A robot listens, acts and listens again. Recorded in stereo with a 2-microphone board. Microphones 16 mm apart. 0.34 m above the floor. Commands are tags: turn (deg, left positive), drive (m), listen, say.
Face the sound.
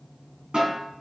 <turn deg="-70"/>
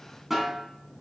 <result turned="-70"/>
<turn deg="-20"/>
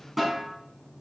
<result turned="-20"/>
<turn deg="-10"/>
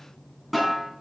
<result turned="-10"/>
<say>Found it: a snare drum, straight ahead.</say>